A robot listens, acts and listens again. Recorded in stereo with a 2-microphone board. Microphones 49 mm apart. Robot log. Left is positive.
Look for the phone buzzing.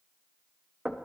cmd idle
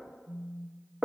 note: The phone buzzing: about 55° left or 125° left.
cmd yaw +55
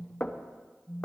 end: Facing the phone buzzing, 2 to 4 m away.